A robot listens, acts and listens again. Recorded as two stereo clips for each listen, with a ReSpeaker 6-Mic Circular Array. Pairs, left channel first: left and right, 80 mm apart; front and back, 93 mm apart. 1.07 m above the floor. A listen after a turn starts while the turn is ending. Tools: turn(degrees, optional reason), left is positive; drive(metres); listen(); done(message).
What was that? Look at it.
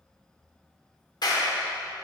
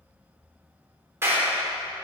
turn(degrees=120, reason="The clap: 120° left.")
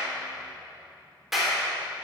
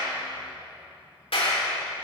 done("Facing the clap, 2 to 4 m away.")